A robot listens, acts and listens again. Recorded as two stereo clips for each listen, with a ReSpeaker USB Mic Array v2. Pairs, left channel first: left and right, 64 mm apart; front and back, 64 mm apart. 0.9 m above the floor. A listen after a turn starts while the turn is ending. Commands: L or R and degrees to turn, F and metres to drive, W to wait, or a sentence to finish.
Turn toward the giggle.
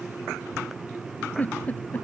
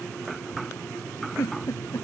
L25
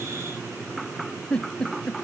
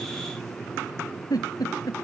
L15
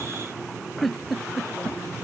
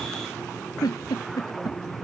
Found it: a giggle, straight ahead.